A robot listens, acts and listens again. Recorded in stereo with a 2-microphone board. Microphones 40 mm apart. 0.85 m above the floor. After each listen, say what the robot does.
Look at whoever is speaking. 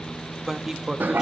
Turn 30° right.
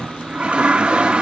Keep listening.
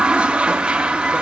Keep listening.
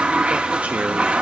I heard a man speaking, but can't make it out now. It was about 20° left or 140° right.